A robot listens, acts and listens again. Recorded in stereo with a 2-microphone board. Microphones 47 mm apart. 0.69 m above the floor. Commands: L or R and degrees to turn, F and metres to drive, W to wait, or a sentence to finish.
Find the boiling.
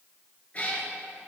W
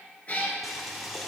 L30
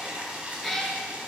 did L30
R35
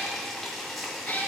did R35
Facing the boiling.